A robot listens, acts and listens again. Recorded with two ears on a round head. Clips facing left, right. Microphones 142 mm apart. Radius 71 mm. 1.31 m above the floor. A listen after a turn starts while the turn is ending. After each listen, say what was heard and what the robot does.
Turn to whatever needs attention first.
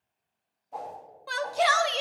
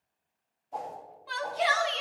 The shout: about 55° left or 125° left. Turn 55° left.
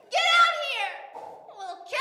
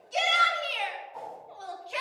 So it is at 60° left. Turn 60° left.
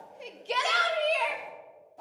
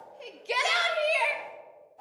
The shout is now 10° right. Turn 10° right.
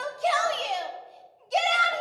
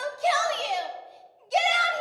Found it: a shout, straight ahead, under 1 m away.